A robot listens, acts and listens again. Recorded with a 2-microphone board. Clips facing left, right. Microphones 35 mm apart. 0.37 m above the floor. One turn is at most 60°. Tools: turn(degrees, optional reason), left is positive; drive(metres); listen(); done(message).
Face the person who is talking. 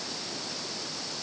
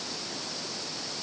listen()
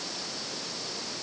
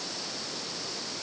listen()
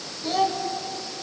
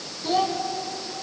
turn(degrees=-30)
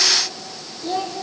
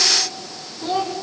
turn(degrees=-60, reason="So it is at 130° right.")
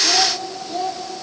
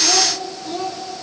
turn(degrees=-60, reason="The child speaking is now 60° right.")
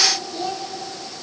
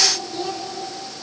turn(degrees=-15, reason="The child speaking is now 15° right.")
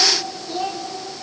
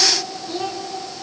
done("Facing the child speaking.")